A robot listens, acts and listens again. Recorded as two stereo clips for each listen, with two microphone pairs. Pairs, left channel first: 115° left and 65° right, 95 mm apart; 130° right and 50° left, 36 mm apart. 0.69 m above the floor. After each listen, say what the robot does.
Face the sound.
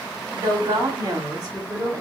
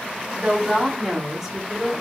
Turn 30° right.
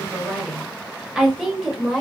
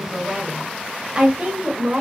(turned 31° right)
Turn 20° left.
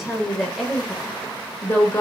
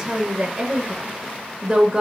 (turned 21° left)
Turn 75° left.
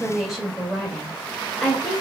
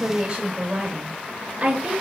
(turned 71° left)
Turn 20° left.
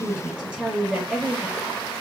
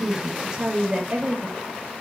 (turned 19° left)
Facing the woman speaking.